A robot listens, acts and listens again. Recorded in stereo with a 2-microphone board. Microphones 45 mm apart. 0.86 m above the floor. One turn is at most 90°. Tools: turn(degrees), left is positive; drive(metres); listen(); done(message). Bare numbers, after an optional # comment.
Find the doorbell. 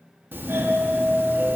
# The doorbell: about 50° right or 130° right.
turn(-50)
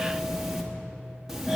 # So it is at 10° right.
turn(-10)
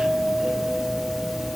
done("Facing the doorbell, 1 to 2 m away.")